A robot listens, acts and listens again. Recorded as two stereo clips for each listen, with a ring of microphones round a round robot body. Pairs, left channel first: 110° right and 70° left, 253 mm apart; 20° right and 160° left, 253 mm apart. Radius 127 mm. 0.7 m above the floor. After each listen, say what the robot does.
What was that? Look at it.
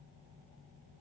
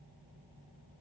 Keep listening.
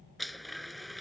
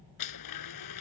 Turn 25° right.
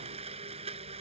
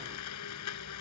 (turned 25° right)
Facing the blender.